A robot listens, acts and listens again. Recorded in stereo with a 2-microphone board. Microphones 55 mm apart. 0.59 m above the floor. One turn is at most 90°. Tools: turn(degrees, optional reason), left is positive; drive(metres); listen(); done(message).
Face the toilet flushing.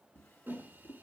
listen()
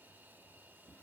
listen()
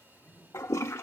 turn(degrees=60, reason="The toilet flushing: about 60° left or 120° left.")
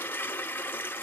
turn(degrees=45, reason="So it is at 45° left.")
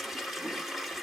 done("Found it: a toilet flushing, straight ahead, under 1 m away.")